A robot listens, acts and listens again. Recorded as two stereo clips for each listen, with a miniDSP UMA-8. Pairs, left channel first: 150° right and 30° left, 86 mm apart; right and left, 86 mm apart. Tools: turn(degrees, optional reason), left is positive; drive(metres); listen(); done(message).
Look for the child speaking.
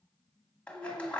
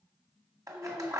done("Found it: a child speaking, straight ahead.")